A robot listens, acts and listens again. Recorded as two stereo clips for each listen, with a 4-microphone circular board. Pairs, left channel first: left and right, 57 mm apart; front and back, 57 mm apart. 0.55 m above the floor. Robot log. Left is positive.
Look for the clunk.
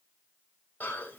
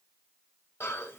cmd idle
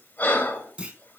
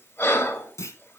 note: The clunk: 20° right.
cmd yaw -20
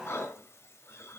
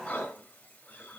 end: Facing where the clunk came from. I can't hear it now.